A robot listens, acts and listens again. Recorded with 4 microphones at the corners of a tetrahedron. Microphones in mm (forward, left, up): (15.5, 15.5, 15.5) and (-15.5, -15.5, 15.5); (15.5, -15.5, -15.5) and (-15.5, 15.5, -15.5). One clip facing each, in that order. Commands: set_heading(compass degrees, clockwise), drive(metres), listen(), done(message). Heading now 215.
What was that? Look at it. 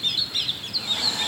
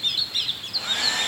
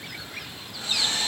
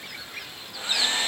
set_heading(20)
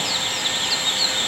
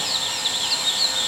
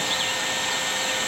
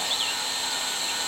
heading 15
done("Found it: a hair dryer, straight ahead, over 4 m away.")